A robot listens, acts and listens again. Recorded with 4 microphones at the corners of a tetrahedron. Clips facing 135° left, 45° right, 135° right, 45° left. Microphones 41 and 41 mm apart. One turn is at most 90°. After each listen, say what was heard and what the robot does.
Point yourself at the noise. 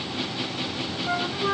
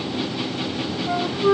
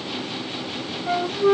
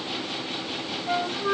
The flute: 160° right. Turn 90° right.
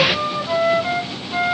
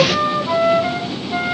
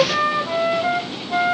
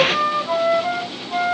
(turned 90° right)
The flute is now 90° right. Turn 90° right.
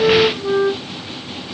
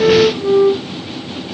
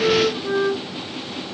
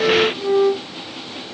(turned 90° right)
Facing the flute.